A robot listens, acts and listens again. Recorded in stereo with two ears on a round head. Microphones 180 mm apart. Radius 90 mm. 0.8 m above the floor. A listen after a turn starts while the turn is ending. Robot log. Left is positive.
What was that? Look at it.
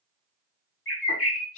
note: The bird: about 75° left or 105° left.
cmd yaw +75
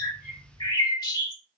note: So it is at 20° left.
cmd yaw +20
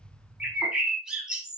end: Facing the bird.